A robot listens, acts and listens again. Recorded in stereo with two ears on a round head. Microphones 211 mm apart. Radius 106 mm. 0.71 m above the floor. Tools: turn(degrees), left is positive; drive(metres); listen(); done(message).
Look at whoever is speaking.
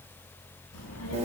turn(degrees=90)
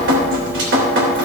listen()
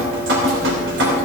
listen()
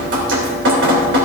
done("I heard a child speaking from this way, but can't make it out now.")